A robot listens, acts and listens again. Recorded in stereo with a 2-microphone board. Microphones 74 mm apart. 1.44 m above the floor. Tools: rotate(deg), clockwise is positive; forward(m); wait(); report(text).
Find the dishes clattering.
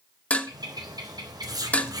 rotate(-15)
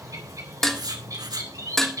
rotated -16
report("Facing the dishes clattering, 1 to 2 m away.")